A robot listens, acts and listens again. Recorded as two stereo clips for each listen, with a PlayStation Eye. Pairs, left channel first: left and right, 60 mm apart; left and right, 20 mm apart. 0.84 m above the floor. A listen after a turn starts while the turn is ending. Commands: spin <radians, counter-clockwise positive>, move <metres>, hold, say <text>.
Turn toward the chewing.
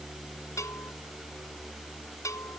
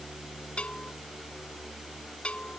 hold
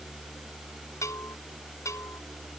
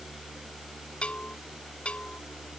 hold
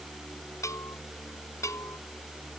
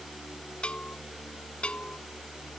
say I can't make out chewing to turn to.